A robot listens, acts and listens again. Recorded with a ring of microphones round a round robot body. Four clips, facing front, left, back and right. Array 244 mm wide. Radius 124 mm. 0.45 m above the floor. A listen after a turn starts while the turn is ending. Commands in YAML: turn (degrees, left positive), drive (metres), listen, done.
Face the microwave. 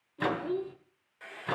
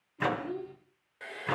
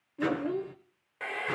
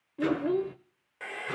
turn: 55
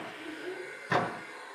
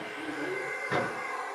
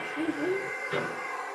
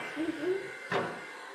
done: "Facing the microwave, 2 to 4 m away."